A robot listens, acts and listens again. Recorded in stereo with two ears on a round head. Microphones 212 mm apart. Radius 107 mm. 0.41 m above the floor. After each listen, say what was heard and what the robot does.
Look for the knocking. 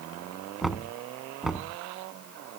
Turn 30° left.
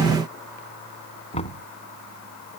So it is at 150° left. Turn 150° left.
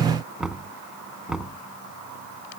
Facing the knocking.